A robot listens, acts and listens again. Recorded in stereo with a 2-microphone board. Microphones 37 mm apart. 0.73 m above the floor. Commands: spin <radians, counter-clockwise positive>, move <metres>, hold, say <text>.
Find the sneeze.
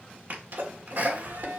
spin -0.96
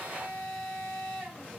hold
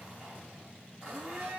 say I heard a sneeze, but can't make it out now. It was about straight ahead or 70° right.